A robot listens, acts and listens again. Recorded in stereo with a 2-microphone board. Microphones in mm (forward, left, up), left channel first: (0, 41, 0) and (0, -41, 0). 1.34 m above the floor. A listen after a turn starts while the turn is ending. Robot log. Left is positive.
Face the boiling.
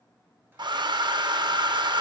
cmd idle
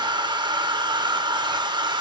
cmd idle
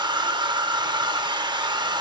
end: I can't make out boiling, only a hair dryer.